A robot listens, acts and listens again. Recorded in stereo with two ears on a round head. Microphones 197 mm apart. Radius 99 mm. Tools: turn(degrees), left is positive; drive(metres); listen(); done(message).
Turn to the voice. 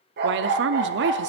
turn(degrees=-55)
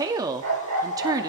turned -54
turn(degrees=-20)
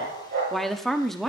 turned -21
done("Facing the woman speaking.")